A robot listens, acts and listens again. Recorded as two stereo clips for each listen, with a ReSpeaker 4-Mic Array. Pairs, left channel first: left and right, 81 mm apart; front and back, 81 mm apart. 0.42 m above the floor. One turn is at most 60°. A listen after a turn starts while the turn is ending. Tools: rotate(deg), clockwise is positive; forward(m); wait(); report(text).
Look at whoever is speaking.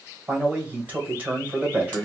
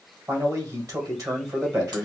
rotate(60)
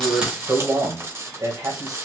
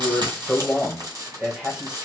rotate(60)
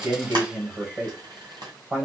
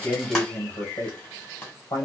rotate(30)
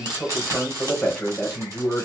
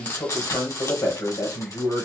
report("Found it: a man speaking, straight ahead, 1 to 2 m away.")